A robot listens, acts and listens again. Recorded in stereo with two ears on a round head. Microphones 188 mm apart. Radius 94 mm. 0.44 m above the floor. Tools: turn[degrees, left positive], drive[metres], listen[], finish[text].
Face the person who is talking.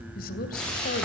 Thought: The woman speaking: about 45° left or 135° left.
Action: turn[45]
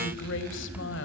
Thought: So it is at 80° left.
Action: turn[80]
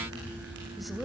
Action: finish[Facing the woman speaking.]